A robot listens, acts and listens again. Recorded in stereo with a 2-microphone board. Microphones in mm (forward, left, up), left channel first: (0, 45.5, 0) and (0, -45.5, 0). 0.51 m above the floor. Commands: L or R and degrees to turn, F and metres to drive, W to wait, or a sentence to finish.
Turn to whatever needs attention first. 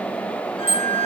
R20
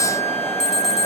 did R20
Found it: an alarm, straight ahead, 2 to 4 m away.